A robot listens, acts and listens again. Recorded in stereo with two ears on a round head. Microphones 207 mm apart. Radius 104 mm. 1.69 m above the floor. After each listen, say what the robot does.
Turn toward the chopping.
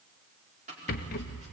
Turn 30° right.
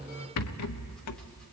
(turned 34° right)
Keep listening.
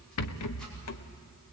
Keep listening.
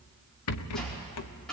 Found it: chopping, straight ahead.